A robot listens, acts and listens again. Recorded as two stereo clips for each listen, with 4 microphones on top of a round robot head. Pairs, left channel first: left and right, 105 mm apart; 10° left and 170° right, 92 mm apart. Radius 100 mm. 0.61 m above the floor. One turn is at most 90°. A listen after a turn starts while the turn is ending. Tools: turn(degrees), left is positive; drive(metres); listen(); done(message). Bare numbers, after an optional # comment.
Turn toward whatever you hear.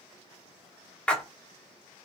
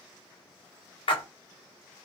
# The splash: 10° left.
turn(10)
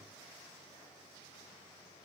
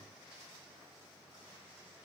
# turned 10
done("I heard a splash from this way, but can't make it out now.")